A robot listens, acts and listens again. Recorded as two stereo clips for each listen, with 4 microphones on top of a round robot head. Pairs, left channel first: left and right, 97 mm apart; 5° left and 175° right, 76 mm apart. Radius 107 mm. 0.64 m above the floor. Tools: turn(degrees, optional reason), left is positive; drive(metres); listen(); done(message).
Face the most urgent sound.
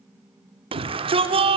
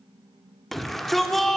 turn(degrees=-85, reason="The shout: 85° right.")
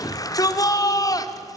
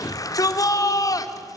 turn(degrees=40, reason="The shout is now 40° left.")
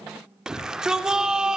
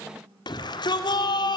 done("Facing the shout.")